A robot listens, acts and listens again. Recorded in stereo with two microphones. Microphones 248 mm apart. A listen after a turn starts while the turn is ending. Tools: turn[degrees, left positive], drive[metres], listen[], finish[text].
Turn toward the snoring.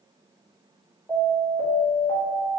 Action: listen[]
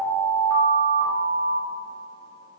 Action: listen[]
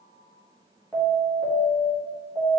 Action: finish[I can't make out snoring, only an alarm.]